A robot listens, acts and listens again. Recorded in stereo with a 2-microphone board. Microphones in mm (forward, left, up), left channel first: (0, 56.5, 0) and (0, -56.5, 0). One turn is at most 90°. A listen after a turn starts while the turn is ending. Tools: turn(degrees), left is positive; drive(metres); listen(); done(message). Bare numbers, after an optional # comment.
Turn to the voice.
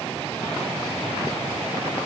listen()
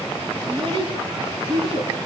# The child speaking: about 50° right or 130° right.
turn(-50)
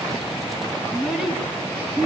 done("Found it: a child speaking, straight ahead.")